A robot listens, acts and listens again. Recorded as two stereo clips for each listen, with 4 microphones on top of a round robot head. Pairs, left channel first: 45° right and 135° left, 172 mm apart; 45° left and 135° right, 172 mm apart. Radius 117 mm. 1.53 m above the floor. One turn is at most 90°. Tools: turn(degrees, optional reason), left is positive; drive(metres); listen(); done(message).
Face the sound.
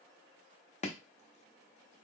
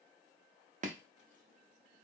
turn(degrees=-90, reason="The chopping: 90° right.")
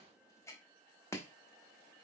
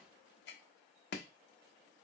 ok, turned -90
turn(degrees=30, reason="The chopping is now 30° left.")
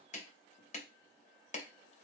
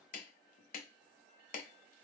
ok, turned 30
done("Found it: chopping, straight ahead.")